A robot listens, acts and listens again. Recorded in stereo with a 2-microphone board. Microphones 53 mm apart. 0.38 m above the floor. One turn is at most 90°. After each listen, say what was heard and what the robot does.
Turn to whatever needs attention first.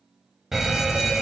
Turn 30° right.
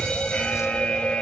So it is at 20° left. Turn 20° left.
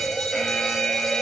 Found it: a fire alarm, straight ahead.